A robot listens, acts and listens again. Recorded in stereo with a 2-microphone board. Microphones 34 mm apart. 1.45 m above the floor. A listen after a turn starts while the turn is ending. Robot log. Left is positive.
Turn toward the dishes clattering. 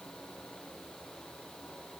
cmd idle
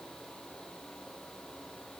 cmd idle
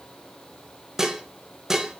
cmd yaw -30
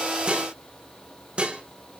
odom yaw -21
note: So it is at 140° right.
cmd yaw -140
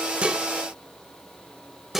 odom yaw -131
note: The dishes clattering is now 10° right.
cmd yaw -10
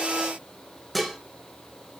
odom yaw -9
end: Found it: dishes clattering, straight ahead, under 1 m away.